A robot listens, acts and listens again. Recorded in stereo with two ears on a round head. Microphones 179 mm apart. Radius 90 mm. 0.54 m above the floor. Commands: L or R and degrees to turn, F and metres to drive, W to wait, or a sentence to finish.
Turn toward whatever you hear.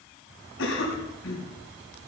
L70
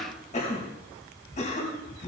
L35
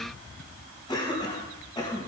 L20
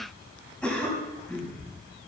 Facing the cough, over 4 m away.